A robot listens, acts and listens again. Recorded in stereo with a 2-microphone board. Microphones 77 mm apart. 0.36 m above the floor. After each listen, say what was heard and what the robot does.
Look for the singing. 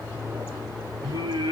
Turn 90° right.
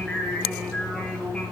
So it is at 10° left. Turn 10° left.
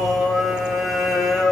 Facing the singing, over 4 m away.